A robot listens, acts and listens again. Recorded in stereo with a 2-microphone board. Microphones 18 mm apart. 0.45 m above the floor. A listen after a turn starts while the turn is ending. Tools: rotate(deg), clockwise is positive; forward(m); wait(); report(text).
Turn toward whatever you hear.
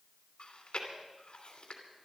rotate(-55)
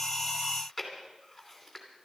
report("Found it: chewing, straight ahead, 2 to 4 m away.")